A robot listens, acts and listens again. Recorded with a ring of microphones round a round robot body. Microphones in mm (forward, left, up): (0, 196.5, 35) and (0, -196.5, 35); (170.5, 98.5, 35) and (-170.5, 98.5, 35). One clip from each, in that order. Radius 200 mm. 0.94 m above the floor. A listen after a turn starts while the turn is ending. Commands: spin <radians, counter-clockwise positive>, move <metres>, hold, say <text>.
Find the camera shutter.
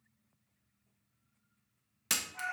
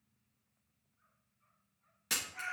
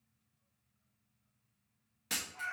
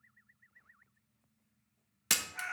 spin 2.79
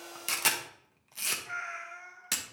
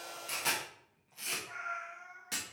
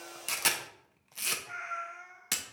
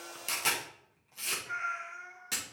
spin 0.70
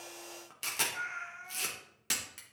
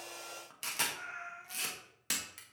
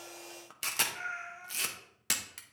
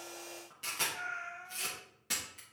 say Facing the camera shutter.